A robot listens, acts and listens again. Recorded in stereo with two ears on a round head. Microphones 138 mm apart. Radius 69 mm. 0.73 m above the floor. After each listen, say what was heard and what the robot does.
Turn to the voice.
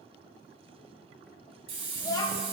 The child speaking: about 25° left or 155° left. Turn 25° left.
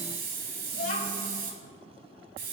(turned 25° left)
So it is at 130° left. Turn 130° left.
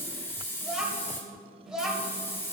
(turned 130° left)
Facing the child speaking, 1 to 2 m away.